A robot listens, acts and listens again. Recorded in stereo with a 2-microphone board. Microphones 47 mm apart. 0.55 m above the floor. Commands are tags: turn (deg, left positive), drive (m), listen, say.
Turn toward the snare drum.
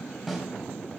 <turn deg="30"/>
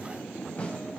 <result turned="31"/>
<listen/>
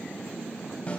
<turn deg="150"/>
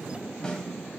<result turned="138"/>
<turn deg="15"/>
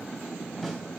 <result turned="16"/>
<listen/>
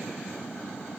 <listen/>
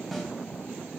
<say>Facing the snare drum, 2 to 4 m away.</say>